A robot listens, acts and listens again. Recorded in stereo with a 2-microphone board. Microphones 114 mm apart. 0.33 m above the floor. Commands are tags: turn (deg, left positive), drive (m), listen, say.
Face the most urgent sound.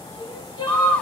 <turn deg="40"/>
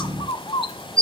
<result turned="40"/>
<listen/>
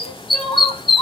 <say>Facing the crying, over 4 m away.</say>